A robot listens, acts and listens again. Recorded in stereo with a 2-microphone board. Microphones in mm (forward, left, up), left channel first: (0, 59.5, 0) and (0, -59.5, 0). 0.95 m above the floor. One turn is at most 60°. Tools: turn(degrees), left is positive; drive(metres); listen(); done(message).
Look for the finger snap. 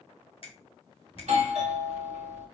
turn(degrees=50)
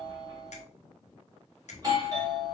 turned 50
turn(degrees=60)
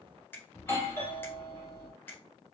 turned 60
turn(degrees=20)
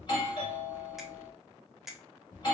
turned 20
done("Found it: a finger snap, straight ahead, under 1 m away.")